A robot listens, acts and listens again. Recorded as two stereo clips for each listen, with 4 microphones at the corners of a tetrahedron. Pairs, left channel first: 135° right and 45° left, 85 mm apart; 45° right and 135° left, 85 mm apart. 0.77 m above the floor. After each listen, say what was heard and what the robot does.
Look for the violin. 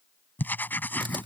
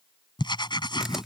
Keep listening.
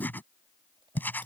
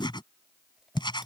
Keep listening.
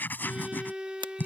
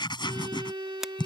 The violin: 120° left. Turn 120° left.
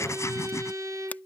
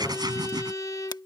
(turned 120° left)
Facing the violin.